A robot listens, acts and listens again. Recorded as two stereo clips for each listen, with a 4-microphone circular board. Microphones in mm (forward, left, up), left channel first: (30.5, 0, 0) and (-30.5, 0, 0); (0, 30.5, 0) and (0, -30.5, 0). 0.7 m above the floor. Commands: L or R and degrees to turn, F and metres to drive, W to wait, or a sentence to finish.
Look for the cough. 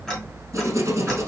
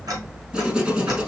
W
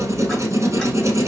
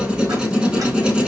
W
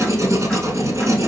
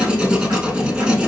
I can't make out a cough to turn to.